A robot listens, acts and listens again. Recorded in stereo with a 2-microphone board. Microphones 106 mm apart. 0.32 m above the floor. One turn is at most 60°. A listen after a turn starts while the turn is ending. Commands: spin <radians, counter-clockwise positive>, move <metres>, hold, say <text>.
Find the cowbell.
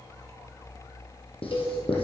spin 0.87
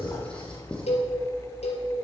spin 1.05
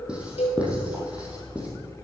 spin 1.05
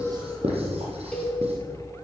spin 0.17
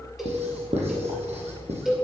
say Facing the cowbell.